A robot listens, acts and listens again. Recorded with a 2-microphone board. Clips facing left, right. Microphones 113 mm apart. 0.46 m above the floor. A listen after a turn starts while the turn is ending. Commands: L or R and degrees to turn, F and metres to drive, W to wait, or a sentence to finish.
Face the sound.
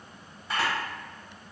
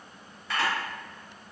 L25
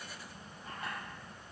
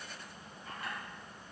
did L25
W
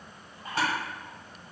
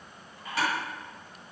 L130
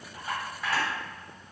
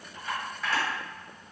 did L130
Found it: a camera shutter, straight ahead, 1 to 2 m away.